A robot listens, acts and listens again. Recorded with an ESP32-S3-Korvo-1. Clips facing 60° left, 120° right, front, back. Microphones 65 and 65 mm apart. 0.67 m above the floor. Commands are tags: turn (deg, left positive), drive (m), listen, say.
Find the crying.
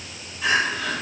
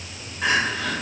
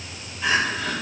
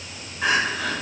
<turn deg="-160"/>
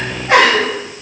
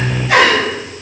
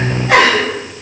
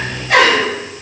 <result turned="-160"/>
<turn deg="10"/>
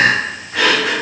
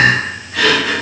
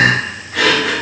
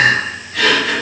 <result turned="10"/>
<say>Found it: crying, straight ahead, 1 to 2 m away.</say>